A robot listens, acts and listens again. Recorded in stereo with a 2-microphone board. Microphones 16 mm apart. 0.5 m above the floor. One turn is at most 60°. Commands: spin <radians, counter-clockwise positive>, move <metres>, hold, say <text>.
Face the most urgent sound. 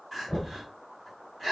spin -0.52
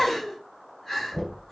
spin 0.26
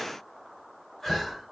spin 0.17
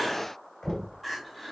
say Facing the crying, 2 to 4 m away.